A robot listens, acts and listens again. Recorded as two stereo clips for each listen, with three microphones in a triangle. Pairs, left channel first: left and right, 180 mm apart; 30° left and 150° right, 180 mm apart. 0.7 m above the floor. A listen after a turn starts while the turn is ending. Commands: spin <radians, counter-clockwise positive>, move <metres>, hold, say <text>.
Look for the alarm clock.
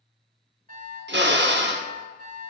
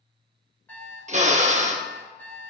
spin -0.87
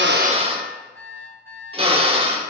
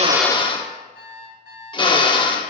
spin 0.26
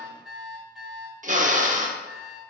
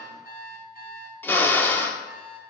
say Facing the alarm clock, 2 to 4 m away.